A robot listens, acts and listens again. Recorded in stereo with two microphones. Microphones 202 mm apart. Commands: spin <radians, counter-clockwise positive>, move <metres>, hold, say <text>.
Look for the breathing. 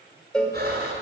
spin -0.96
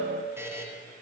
hold
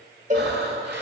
spin -1.13
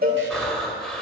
say Found it: breathing, straight ahead, 1 to 2 m away.